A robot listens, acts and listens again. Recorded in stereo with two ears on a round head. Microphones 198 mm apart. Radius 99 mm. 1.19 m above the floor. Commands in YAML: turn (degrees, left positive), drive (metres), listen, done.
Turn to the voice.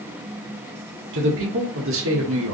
turn: -70
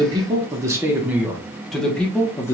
turn: 15
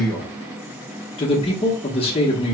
turn: 25
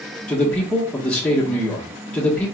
done: "Found it: a man speaking, straight ahead, 1 to 2 m away."